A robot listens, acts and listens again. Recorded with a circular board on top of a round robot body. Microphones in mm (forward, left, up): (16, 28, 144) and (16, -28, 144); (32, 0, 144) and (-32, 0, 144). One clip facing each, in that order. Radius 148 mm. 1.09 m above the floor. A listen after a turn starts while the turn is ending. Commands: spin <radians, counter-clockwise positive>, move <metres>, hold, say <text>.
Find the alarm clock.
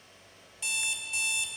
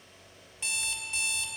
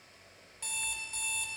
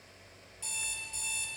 spin -0.61
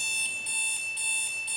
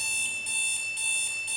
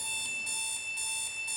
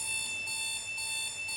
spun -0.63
say Found it: an alarm clock, straight ahead, 1 to 2 m away.